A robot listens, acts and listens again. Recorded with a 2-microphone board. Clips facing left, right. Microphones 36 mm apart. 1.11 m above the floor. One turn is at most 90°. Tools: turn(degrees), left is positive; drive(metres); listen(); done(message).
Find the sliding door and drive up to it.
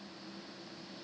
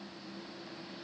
listen()
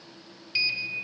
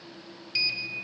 turn(degrees=30)
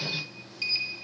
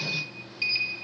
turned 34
turn(degrees=-20)
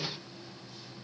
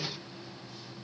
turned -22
listen()
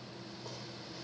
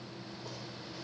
drive(metres=1.0)
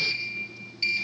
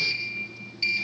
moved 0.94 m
drive(metres=1.0)
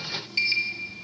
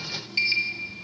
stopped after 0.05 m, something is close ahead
done("I am next to the sliding door.")